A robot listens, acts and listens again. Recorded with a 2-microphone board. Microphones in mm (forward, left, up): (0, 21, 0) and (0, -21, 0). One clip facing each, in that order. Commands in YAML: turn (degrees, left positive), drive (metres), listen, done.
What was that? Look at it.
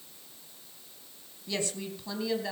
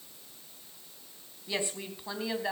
turn: -20
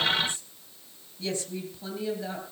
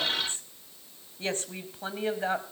turn: -135
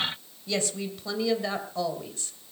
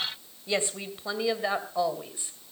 turn: -20
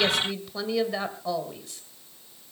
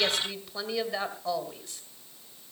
done: "Facing the woman speaking."